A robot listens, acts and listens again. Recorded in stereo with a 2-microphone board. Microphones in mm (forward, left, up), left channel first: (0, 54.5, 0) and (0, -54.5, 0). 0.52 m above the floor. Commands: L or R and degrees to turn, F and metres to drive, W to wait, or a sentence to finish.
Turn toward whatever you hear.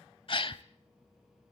L55
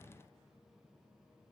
W
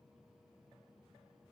I heard a gasp, but can't make it out now. It was about straight ahead or 70° left.